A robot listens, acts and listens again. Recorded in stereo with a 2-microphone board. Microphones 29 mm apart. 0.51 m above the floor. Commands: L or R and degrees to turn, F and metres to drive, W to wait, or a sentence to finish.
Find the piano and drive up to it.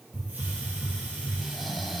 W
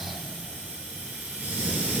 W
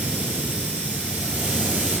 I can't make out a piano to turn to.